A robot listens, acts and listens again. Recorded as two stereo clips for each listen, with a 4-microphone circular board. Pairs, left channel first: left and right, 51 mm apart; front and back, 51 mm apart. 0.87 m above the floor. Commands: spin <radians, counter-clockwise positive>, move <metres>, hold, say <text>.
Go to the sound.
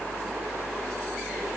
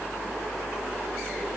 hold
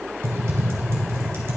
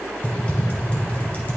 spin -0.96
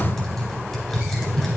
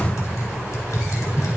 spin 0.17
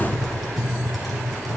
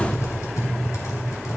move 1.0
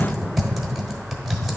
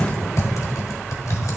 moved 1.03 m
move 1.0
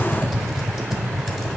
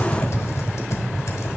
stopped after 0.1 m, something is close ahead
say Arrived at the typing on a keyboard, straight ahead.